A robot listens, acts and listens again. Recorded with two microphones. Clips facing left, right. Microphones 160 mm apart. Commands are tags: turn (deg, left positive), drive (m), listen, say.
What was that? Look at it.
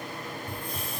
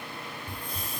<turn deg="-35"/>
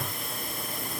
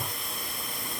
<say>Facing the hiss.</say>